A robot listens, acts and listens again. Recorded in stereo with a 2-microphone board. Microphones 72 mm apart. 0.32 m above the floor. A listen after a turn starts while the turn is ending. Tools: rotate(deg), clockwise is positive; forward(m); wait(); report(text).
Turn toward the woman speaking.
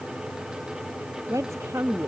rotate(45)
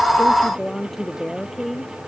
report("Facing the woman speaking.")